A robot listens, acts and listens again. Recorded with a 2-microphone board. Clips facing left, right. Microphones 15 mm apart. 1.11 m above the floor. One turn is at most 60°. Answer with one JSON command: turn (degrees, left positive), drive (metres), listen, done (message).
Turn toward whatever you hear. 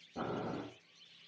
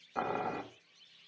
{"turn": -60}
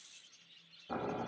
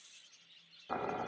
{"turn": -25}
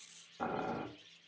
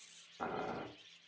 {"done": "Facing the boiling."}